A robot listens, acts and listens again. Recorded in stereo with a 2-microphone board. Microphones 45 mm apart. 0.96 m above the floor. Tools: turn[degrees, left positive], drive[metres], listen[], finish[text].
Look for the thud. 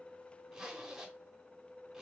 Action: listen[]
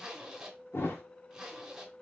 Action: turn[90]
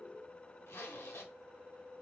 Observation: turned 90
Action: finish[Facing where the thud came from. I can't hear it now.]